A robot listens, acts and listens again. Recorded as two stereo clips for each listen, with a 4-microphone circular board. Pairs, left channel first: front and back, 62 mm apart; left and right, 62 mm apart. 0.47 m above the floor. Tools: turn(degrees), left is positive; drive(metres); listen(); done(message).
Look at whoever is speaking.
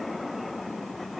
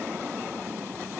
listen()
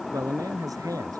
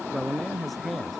turn(degrees=175)
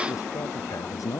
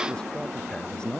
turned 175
turn(degrees=15)
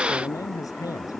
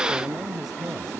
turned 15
done("Found it: a man speaking, straight ahead.")